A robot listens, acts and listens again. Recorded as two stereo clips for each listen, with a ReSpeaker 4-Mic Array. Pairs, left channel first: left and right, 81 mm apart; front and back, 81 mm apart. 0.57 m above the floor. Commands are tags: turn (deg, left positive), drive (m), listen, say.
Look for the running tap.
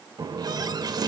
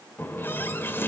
<turn deg="-60"/>
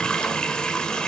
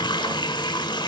<turn deg="10"/>
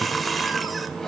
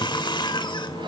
<say>Facing the running tap, 1 to 2 m away.</say>